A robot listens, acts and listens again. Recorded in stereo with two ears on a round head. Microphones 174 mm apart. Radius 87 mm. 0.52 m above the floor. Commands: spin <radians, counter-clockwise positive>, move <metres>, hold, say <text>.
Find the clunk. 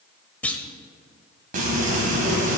spin 0.52
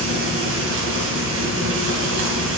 hold
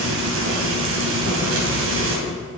say I heard a clunk, but can't make it out now. It was about 25° right or 145° left.